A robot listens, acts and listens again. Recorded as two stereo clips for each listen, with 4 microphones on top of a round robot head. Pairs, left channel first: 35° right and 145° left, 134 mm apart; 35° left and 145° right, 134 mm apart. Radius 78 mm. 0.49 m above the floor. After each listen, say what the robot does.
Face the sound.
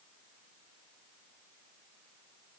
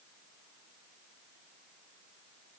Keep listening.
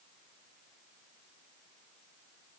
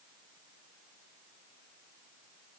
Keep listening.
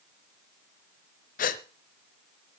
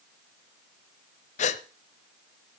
Facing the gasp, under 1 m away.